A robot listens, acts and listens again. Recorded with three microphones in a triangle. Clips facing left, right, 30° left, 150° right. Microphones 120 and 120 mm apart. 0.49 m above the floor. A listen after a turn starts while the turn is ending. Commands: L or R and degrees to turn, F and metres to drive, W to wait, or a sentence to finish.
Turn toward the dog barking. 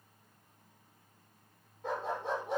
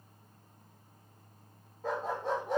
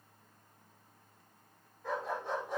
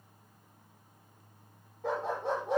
R145
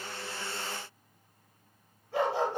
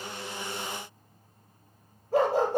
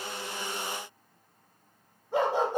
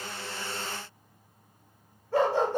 R45
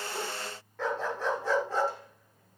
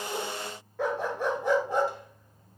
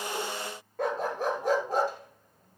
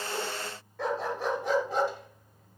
R15
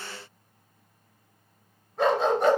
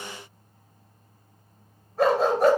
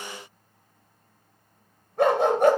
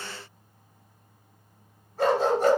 Found it: a dog barking, straight ahead, 2 to 4 m away.